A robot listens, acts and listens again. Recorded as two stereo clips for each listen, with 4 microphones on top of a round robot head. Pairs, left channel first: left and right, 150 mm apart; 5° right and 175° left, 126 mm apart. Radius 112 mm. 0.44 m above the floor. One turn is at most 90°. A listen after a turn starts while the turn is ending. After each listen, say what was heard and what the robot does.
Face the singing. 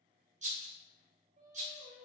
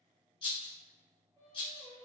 The singing: 75° right. Turn 75° right.
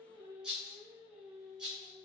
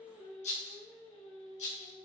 The singing is now 10° left. Turn 10° left.
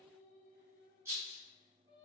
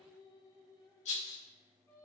The singing is now 45° left. Turn 45° left.
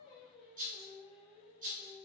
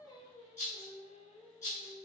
Facing the singing.